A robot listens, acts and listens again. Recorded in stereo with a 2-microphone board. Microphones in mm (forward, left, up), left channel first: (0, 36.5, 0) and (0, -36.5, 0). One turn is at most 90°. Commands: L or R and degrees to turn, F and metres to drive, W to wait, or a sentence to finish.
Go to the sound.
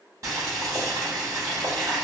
R45
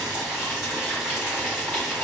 F1.0
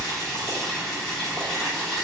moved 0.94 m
F1.0
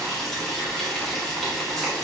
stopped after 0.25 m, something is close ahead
I am next to the boiling.